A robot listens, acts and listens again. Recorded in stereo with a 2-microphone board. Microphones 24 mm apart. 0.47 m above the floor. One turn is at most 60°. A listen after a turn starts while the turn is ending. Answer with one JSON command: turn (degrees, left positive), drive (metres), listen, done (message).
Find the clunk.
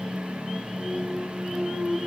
{"turn": -20}
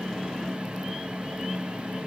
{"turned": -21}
{"listen": true}
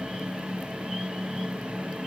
{"done": "I heard a clunk, but can't make it out now. It was about straight ahead or 140° right."}